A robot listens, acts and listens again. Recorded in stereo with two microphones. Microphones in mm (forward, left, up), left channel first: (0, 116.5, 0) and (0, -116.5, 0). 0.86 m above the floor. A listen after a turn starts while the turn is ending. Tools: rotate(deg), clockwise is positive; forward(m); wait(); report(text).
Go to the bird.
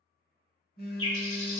rotate(-90)
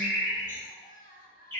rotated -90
rotate(-10)
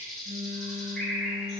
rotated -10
forward(1.0)
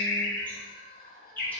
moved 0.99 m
forward(1.0)
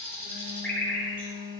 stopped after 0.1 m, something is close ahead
rotate(-10)
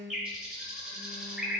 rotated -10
report("I am next to the bird.")